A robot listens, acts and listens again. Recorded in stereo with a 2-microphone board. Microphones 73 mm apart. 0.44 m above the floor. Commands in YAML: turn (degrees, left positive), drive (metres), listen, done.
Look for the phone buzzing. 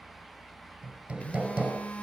turn: 20
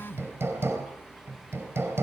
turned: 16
turn: 145
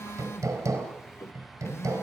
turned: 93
turn: 50
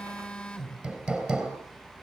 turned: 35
turn: 15
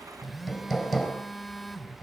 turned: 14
done: "Facing the phone buzzing."